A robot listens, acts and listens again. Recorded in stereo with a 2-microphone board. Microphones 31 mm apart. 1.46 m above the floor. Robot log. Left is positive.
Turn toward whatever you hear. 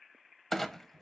cmd yaw +30
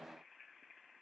cmd idle
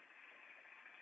end: I heard a clunk, but can't make it out now. It was about 20° right or 140° left.